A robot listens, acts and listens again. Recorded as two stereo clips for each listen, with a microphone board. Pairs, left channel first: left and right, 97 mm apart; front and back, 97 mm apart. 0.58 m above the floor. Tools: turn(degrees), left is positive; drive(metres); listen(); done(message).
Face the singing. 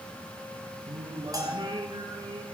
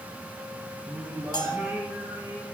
turn(degrees=-110)
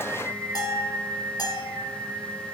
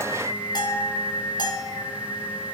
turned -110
turn(degrees=-30)
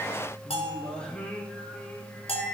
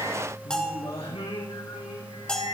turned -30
turn(degrees=10)
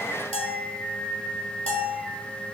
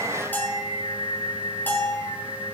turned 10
done("Facing the singing, over 4 m away.")